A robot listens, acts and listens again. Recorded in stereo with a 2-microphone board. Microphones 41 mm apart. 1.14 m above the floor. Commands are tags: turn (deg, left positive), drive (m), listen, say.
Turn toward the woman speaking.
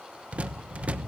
<listen/>
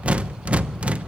<listen/>
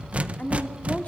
<turn deg="35"/>
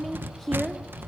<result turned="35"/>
<say>Facing the woman speaking, 2 to 4 m away.</say>